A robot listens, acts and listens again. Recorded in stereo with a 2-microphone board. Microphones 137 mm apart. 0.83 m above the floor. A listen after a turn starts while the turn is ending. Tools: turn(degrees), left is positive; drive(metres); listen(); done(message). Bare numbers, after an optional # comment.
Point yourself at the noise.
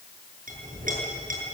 turn(-90)
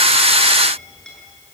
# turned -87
done("Found it: a clink, straight ahead, over 4 m away.")